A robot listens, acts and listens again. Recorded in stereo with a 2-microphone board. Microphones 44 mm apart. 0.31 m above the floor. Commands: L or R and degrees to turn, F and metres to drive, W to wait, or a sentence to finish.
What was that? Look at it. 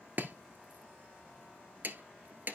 R50
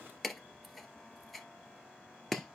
Found it: chopping, straight ahead.